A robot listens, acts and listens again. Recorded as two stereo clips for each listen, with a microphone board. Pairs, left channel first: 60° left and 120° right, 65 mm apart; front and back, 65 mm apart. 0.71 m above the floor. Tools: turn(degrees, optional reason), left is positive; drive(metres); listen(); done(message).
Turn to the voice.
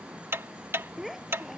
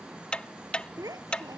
turn(degrees=150, reason="The child speaking: 150° left.")
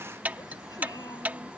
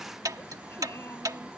listen()
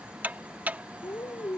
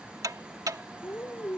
turn(degrees=50, reason="The child speaking is now 50° left.")
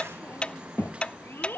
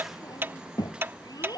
done("Found it: a child speaking, straight ahead.")